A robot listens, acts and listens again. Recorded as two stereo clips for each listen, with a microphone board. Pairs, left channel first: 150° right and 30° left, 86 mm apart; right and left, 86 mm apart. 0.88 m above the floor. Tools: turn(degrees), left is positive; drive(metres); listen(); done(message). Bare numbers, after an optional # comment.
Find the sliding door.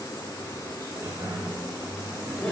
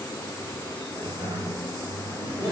# The sliding door: 85° left.
turn(85)
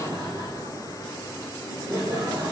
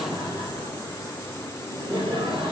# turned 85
listen()
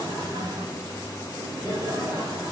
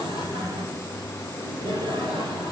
# The sliding door is now 25° left.
turn(25)
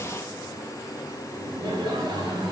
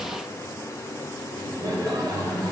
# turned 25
done("Found it: a sliding door, straight ahead, 2 to 4 m away.")